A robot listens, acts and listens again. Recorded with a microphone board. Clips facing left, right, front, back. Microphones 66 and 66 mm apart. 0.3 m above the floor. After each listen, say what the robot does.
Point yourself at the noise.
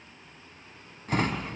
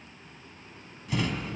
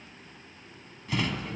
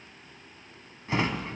Turn 125° left.
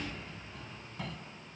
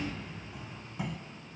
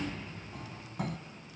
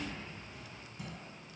Turn 15° right.
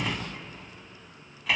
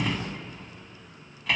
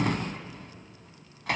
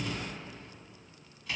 Found it: a drawer, straight ahead, 1 to 2 m away.